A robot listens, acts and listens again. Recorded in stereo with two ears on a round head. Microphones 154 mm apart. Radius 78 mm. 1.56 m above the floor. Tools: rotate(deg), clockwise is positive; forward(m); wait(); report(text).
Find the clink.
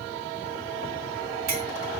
rotate(60)
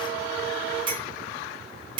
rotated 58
rotate(35)
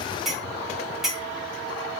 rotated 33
report("Facing the clink.")